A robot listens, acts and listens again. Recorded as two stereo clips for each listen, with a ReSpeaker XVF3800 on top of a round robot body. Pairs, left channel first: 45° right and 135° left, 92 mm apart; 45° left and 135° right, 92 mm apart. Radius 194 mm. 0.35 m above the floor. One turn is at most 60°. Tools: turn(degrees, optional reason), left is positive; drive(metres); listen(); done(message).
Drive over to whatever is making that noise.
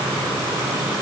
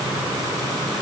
listen()
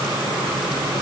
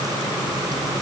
listen()
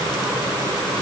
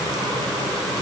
done("I can't make out anything to turn to.")